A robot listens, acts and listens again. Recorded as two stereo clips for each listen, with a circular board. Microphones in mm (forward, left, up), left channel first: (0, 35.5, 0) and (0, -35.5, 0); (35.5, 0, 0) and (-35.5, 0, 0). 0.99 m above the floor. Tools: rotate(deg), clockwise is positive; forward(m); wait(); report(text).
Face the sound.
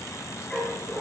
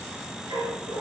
rotate(-160)
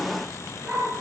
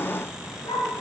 rotate(15)
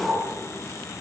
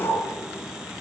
report("Found it: a dog barking, straight ahead, over 4 m away.")